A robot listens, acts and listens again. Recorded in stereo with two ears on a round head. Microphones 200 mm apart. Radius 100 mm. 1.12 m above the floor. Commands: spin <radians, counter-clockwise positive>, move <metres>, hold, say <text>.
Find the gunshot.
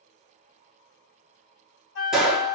spin -0.52
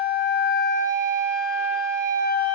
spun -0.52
hold
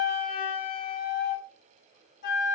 say I heard a gunshot, but can't make it out now. It was about 25° left or 145° right.